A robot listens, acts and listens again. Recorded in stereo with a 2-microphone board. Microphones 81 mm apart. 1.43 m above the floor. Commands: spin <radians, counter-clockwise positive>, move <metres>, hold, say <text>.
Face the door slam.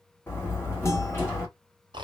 spin 0.52
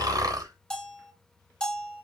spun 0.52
hold
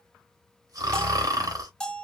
say I heard a door slam, but can't make it out now. It was about straight ahead or 120° left.